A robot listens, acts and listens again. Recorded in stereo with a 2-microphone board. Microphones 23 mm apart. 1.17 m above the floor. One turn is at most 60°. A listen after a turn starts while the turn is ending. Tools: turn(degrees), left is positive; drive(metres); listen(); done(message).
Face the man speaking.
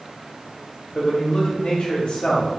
turn(degrees=55)
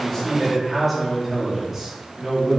turn(degrees=-15)
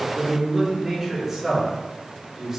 turn(degrees=-15)
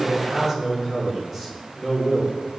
done("Found it: a man speaking, straight ahead, 2 to 4 m away.")